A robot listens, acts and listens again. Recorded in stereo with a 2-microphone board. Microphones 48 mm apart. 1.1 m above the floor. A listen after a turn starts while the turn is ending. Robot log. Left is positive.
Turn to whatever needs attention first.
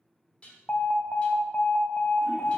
note: The alarm: about 40° left or 140° left.
cmd yaw +40
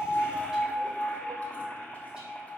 note: So it is at 95° left.
cmd yaw +95
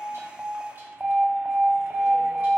note: The alarm is now 30° right.
cmd yaw -30
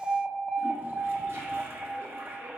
end: Facing the alarm.